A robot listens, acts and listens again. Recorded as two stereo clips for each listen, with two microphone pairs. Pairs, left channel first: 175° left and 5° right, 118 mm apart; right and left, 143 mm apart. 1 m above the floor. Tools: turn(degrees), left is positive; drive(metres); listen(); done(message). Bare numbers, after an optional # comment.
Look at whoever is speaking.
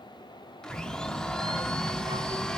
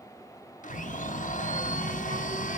# The child speaking: 50° left.
turn(50)
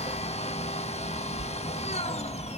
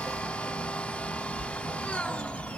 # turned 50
# The child speaking is now 20° right.
turn(-20)
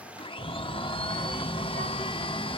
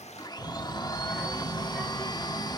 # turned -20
done("Found it: a child speaking, straight ahead.")